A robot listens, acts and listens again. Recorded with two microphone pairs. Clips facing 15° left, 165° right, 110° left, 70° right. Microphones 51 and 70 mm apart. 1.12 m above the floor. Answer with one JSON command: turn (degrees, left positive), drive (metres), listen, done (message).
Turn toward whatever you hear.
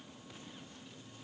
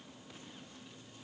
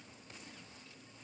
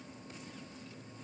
{"listen": true}
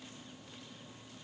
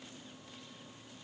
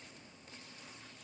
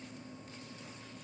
{"listen": true}
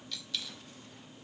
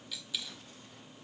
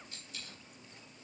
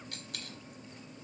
{"turn": -85}
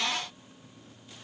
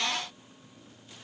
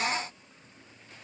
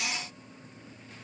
{"done": "I heard a dropped coin from this way, but can't make it out now."}